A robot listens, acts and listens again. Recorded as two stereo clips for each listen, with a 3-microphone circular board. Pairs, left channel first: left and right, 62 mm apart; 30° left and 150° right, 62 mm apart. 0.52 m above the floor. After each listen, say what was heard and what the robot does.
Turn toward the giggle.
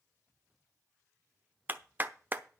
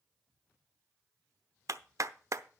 Keep listening.
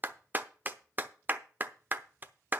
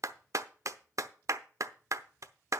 Keep listening.
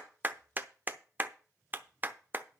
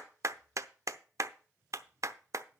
I can't make out a giggle, only a clap.